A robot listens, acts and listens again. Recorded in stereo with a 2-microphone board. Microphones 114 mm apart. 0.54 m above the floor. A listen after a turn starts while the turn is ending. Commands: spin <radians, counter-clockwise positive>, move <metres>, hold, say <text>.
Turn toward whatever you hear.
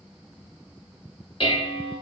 spin 0.87
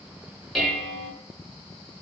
say Found it: dishes clattering, straight ahead.